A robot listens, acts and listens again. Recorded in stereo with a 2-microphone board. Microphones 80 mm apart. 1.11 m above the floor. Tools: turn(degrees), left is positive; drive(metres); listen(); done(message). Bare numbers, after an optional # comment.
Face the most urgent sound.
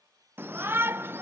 # The shout: about 30° right or 150° right.
turn(-30)
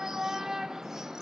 # So it is at 10° right.
turn(-10)
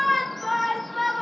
done("Facing the shout, under 1 m away.")